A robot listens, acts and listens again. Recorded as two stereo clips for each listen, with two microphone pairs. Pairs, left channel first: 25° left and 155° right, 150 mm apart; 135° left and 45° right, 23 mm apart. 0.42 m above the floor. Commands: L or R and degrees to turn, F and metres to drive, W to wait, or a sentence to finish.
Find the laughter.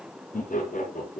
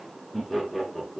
L50
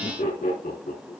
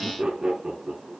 L15
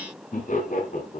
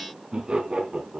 Facing the laughter.